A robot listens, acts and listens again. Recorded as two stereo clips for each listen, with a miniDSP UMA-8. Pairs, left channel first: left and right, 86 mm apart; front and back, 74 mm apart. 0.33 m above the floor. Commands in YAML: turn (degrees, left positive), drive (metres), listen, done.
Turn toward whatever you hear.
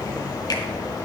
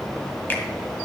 listen: true
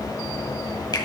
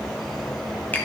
turn: 60
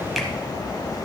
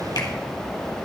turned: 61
listen: true
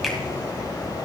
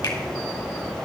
listen: true
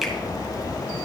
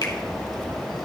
done: "Found it: a finger snap, straight ahead, 1 to 2 m away."